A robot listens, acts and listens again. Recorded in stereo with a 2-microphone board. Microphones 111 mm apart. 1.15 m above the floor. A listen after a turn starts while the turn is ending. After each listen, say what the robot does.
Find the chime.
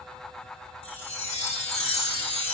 Turn 75° left.
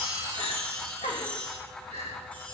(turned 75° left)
Turn 15° left.
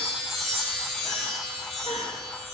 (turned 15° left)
Found it: a chime, straight ahead, 2 to 4 m away.